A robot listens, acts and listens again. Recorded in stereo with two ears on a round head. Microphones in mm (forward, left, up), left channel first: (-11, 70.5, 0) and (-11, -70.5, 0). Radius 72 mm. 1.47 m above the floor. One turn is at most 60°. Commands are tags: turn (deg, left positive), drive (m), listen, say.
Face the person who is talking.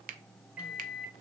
<listen/>
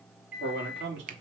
<turn deg="-60"/>
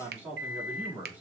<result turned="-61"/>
<turn deg="-10"/>
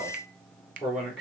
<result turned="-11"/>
<say>Facing the man speaking.</say>